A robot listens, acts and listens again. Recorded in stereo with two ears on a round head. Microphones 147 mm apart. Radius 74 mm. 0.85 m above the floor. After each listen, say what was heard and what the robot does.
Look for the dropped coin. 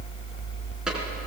Keep listening.
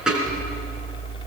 Turn 30° right.
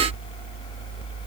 Keep listening.
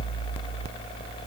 I heard a dropped coin, but can't make it out now. It was about 25° left or 145° right.